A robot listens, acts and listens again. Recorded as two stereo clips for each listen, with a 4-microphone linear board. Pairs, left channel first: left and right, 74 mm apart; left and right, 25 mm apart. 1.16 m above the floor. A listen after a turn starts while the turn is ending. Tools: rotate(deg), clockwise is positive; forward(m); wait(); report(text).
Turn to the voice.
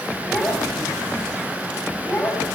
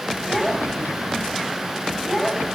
rotate(-25)
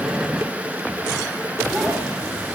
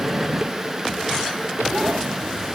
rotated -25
wait()
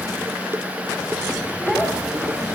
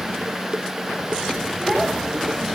wait()
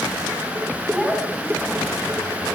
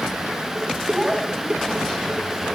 report("Found it: a child speaking, straight ahead, over 4 m away.")